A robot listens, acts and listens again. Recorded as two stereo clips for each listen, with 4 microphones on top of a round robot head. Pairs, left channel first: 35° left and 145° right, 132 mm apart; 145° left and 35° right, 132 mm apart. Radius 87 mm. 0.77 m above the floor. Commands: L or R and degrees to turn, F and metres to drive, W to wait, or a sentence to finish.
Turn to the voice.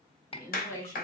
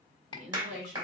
R35
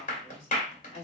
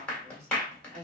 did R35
Found it: a woman speaking, straight ahead.